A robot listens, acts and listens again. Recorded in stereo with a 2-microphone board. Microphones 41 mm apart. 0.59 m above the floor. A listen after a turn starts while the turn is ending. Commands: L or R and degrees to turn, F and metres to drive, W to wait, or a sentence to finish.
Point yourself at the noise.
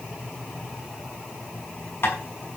L55
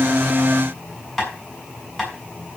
Facing the tapping.